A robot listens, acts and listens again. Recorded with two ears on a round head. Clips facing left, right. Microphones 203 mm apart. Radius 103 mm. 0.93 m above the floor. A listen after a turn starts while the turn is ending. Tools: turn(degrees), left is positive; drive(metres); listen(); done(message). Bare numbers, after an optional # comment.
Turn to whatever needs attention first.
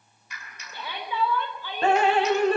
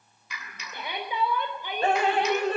# The shout: about 15° right or 165° right.
turn(-15)
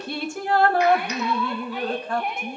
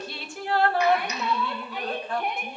done("Found it: a shout, straight ahead.")